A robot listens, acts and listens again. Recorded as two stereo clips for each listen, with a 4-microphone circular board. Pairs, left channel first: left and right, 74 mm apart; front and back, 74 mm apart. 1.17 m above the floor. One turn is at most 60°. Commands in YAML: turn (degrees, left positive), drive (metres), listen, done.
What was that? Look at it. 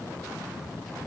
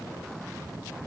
listen: true
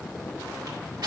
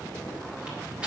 turn: -60
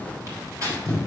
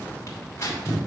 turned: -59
turn: -50
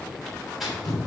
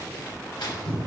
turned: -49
done: "Facing the tearing paper, 2 to 4 m away."